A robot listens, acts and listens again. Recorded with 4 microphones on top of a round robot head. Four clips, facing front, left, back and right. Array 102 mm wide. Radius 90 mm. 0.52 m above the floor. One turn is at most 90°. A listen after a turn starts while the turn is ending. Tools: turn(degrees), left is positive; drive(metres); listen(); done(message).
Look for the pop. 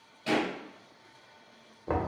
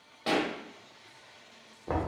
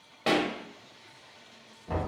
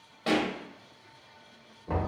turn(degrees=90)
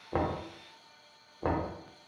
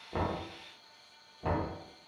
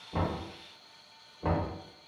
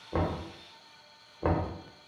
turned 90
turn(degrees=90)
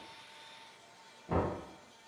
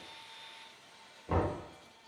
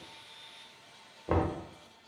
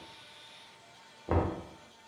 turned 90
done("Facing where the pop came from. I can't hear it now.")